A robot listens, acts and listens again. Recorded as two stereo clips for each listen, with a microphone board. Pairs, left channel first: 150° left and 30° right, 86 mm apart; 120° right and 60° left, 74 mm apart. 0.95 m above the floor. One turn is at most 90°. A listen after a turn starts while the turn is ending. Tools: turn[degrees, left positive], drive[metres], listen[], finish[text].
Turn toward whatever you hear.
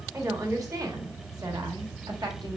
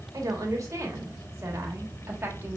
Action: finish[Facing the woman speaking.]